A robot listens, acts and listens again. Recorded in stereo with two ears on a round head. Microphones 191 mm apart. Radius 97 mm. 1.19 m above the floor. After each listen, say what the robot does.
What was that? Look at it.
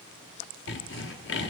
Turn 55° left.
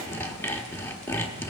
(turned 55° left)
Turn 10° left.
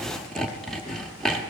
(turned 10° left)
Facing the sawing.